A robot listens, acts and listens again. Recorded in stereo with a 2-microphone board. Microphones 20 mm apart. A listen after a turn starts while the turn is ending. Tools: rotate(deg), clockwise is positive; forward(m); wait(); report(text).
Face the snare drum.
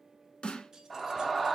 rotate(-65)
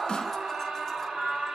wait()
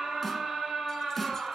wait()
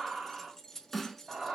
rotate(-10)
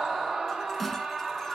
wait()
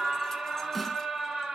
wait()
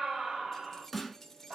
report("Found it: a snare drum, straight ahead, under 1 m away.")